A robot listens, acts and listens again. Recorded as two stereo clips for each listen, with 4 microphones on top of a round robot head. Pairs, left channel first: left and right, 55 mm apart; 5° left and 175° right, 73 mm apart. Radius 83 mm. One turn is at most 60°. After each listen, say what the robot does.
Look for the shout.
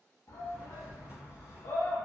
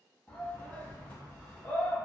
Turn 60° left.
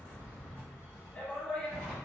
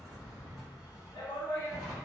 Turn 20° left.
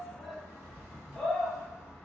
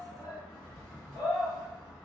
Facing the shout, under 1 m away.